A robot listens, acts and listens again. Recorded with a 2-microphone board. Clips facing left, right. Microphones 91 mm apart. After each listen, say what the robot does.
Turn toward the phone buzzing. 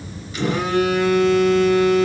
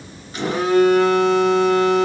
Turn 35° right.
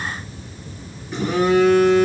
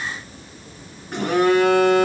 Turn 110° right.
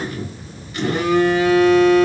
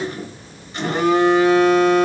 Turn 30° right.
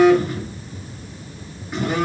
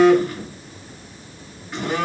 Turn 10° left.
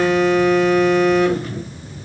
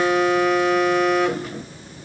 Found it: a phone buzzing, straight ahead, 1 to 2 m away.